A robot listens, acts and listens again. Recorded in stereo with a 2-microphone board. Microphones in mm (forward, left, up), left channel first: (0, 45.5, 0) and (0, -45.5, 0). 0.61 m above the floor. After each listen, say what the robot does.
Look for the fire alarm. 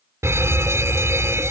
Turn 30° right.
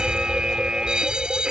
Turn 10° right.
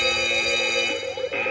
Found it: a fire alarm, straight ahead.